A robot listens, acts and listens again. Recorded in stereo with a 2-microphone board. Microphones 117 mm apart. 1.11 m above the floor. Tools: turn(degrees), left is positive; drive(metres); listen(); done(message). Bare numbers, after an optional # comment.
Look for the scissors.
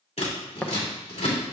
# The scissors: about 65° left or 115° left.
turn(65)
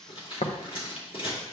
# So it is at 55° left.
turn(55)
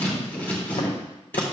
# The scissors is now 15° left.
turn(15)
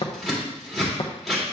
done("Facing the scissors.")